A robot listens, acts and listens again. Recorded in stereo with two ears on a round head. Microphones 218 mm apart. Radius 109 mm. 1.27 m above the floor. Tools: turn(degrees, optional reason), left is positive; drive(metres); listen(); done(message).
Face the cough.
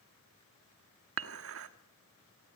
listen()
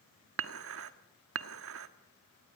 listen()
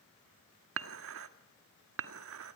done("I can't make out a cough, only dishes clattering.")